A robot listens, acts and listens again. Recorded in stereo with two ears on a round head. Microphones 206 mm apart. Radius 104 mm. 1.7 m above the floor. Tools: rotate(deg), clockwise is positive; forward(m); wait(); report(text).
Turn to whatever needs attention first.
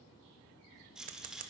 wait()
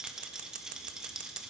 wait()
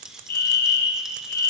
rotate(-40)
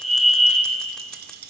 report("Facing the fire alarm.")